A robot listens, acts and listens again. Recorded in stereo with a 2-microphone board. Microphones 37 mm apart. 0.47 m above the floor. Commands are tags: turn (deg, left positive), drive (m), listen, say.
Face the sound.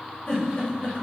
<turn deg="50"/>
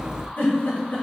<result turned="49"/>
<turn deg="70"/>
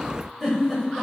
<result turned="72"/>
<say>Found it: a giggle, straight ahead, 1 to 2 m away.</say>